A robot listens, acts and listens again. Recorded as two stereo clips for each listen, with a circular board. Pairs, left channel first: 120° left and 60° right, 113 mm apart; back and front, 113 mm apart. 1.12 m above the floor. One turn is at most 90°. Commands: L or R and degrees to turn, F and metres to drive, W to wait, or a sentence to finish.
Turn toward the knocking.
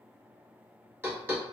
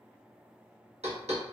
L10
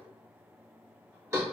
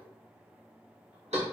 Found it: knocking, straight ahead.